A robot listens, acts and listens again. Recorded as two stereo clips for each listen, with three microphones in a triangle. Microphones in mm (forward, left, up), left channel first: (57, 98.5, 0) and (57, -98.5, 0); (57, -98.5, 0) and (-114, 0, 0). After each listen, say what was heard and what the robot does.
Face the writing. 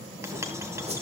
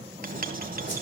The writing: 165° right. Turn 165° right.
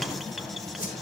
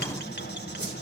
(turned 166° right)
Found it: writing, straight ahead, 1 to 2 m away.